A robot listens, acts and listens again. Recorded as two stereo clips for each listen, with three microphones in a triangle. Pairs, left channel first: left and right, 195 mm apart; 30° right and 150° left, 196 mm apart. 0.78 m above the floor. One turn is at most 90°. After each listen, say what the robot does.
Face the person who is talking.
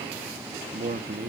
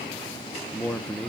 Turn 90° right.
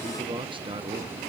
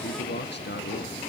Turn 25° right.
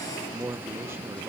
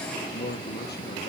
Turn 15° right.
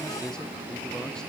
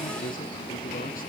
Keep listening.
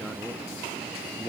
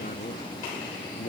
Keep listening.
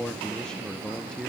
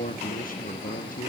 Facing the man speaking.